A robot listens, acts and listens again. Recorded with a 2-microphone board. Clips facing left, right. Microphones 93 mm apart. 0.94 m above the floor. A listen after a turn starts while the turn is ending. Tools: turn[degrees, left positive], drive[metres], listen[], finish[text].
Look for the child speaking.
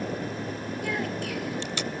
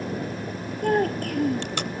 Thought: The child speaking: about 45° right or 135° right.
Action: turn[-45]
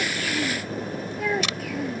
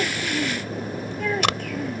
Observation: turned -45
Action: finish[Found it: a child speaking, straight ahead.]